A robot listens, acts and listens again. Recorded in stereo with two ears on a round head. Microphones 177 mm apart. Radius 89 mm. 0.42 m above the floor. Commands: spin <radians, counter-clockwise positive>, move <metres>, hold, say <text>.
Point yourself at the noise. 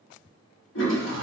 spin 1.22
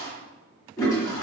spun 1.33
spin 0.35
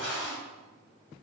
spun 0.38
say Found it: a toilet flushing, straight ahead.